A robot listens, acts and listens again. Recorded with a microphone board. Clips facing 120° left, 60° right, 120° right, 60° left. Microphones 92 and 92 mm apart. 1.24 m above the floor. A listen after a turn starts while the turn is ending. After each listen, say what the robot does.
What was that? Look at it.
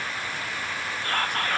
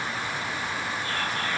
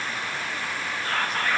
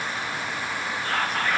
Turn 150° left.
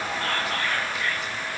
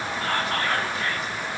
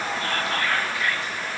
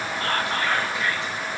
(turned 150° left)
Turn 10° right.
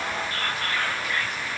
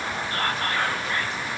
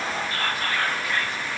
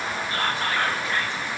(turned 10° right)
Facing the whispering, 1 to 2 m away.